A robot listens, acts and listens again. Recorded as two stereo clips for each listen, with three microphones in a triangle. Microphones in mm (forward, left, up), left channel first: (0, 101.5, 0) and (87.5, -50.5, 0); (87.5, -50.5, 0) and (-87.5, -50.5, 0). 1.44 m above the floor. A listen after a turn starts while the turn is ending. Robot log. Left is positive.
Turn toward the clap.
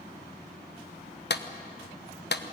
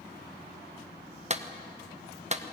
note: The clap: 135° left.
cmd yaw +135
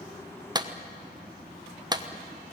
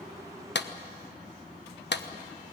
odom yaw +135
note: The clap is now 10° left.
cmd yaw +10
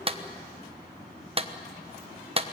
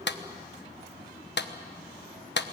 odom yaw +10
end: Found it: a clap, straight ahead.